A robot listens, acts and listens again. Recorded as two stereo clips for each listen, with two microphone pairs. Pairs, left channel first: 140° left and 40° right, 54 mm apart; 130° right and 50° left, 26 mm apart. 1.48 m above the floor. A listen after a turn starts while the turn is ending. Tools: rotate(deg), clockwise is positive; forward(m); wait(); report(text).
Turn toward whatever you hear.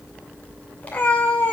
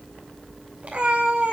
rotate(-80)
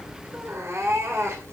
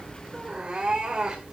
rotate(10)
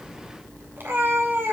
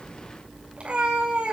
report("Found it: a cat meowing, straight ahead.")